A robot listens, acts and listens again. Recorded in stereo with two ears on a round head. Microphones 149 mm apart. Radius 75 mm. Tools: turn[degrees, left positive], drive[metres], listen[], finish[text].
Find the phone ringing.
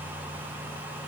Action: listen[]
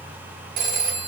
Thought: The phone ringing: about 50° right or 130° right.
Action: turn[-50]
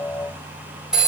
Action: finish[Facing the phone ringing, 1 to 2 m away.]